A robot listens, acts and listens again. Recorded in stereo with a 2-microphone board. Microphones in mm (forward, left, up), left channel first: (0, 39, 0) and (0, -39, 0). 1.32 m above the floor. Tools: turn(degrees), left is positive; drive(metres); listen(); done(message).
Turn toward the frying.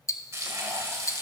turn(degrees=-40)
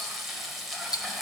done("Found it: frying, straight ahead.")